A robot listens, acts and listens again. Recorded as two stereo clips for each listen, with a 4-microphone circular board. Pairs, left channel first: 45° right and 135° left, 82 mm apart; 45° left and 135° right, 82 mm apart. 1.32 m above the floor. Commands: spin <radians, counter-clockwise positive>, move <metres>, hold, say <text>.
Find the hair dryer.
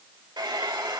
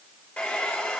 spin 2.01
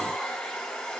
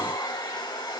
spin 0.52
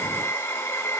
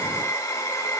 say Found it: a hair dryer, straight ahead.